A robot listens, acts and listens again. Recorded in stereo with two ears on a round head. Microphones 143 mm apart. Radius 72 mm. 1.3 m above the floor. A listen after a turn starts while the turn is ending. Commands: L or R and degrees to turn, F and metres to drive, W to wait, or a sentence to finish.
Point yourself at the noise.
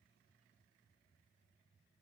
W
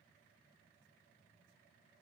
W
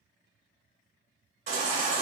R45
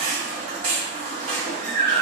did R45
R80
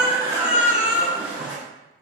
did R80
R10
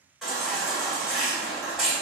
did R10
Facing the baby crying.